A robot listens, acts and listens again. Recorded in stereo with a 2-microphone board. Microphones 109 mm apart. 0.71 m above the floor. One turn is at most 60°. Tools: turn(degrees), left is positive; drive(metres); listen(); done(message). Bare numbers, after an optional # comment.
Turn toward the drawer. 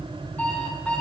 listen()
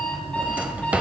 turn(-30)
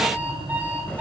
listen()
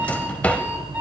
# So it is at 15° left.
turn(15)
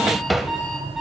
done("Facing the drawer.")